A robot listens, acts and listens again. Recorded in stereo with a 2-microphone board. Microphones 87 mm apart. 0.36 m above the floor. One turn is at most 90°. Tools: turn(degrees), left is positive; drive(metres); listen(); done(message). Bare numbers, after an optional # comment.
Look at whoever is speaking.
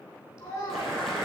# The child speaking: about 50° left or 130° left.
turn(50)
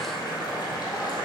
listen()
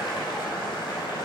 listen()
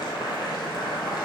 done("I heard a child speaking, but can't make it out now. It was about straight ahead or 80° left.")